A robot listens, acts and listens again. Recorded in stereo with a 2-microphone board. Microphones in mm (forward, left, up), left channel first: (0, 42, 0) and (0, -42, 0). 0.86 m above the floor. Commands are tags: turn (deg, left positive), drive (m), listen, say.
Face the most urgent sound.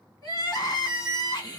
<turn deg="55"/>
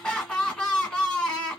<turn deg="15"/>
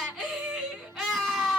<say>Found it: crying, straight ahead.</say>